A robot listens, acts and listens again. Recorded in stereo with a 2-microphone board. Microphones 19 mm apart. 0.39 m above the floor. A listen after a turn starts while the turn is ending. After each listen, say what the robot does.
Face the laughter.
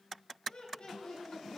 Turn 55° left.
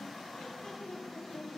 Turn 55° left.
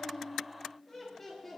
Turn 20° left.
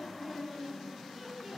Found it: laughter, straight ahead.